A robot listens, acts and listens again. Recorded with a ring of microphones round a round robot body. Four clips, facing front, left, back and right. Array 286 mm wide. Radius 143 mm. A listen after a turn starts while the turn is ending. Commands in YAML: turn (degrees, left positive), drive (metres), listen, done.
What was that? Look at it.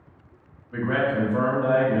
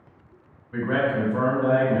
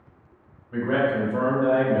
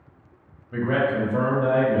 turn: -125
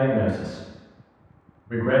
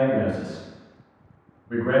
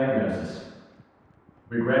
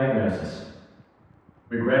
turn: 10
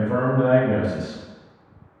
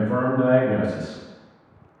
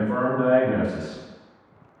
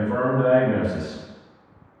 done: "Facing the man speaking."